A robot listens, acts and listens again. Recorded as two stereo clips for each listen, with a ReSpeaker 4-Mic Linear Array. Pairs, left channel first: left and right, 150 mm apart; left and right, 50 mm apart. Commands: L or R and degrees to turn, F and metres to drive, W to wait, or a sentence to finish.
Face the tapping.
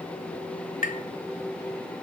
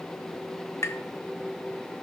L70
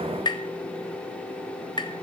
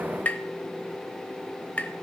L35
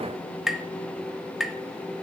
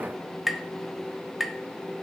Found it: tapping, straight ahead.